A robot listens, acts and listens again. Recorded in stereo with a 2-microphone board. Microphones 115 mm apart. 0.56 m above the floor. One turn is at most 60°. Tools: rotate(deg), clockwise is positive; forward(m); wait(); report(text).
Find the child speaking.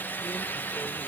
wait()
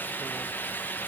wait()
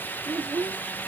rotate(35)
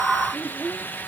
report("Found it: a child speaking, straight ahead.")